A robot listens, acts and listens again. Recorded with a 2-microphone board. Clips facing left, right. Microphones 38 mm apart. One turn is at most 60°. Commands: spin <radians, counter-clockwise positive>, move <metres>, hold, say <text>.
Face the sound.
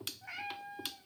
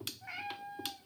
spin -0.52
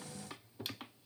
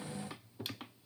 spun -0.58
hold
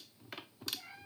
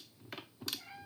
spin 0.17
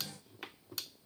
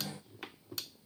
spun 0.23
hold
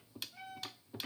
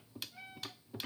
spin -0.17
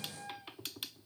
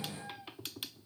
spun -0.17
spin -0.17
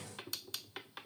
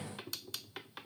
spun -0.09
hold
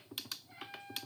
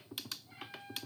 spin -0.17
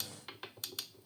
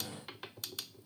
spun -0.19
hold
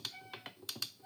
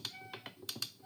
say Facing the cat meowing.